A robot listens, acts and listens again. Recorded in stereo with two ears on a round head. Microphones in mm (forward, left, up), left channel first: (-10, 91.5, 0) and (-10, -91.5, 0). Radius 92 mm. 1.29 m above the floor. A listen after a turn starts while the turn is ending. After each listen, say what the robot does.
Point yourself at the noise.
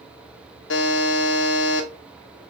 Turn 65° left.
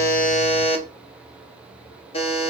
Turn 30° left.
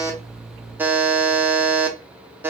Turn 10° right.
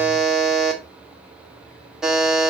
Facing the buzzer, under 1 m away.